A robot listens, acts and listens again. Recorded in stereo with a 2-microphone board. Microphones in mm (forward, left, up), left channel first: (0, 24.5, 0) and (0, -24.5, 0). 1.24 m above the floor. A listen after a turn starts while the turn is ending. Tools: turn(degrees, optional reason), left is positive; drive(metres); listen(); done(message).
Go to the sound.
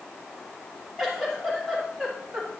turn(degrees=30)
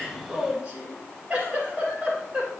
turn(degrees=-25, reason="So it is at 25° right.")
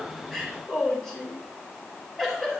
drive(metres=1.0)
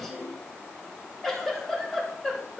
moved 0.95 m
drive(metres=1.0)
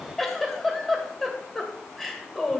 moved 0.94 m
drive(metres=1.0)
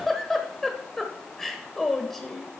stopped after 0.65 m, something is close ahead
done("Arrived at the giggle, straight ahead.")